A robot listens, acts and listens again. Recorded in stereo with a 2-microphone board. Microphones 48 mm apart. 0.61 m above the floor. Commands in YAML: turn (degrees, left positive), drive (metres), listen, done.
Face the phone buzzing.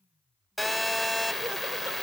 turn: 30
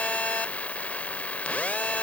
turn: 145
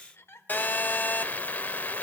turn: 45
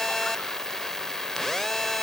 turn: 10
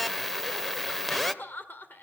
done: "Found it: a phone buzzing, straight ahead, under 1 m away."